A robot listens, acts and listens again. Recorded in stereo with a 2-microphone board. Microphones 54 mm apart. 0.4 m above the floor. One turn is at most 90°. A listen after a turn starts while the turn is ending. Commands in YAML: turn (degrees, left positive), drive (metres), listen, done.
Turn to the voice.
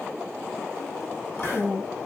turn: 30
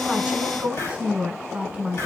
turn: -30
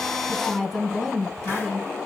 done: "Facing the woman speaking."